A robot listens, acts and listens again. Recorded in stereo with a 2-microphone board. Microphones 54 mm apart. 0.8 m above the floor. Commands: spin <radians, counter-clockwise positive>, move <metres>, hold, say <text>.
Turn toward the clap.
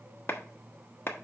spin 0.87
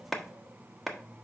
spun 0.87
say Found it: a clap, straight ahead, 1 to 2 m away.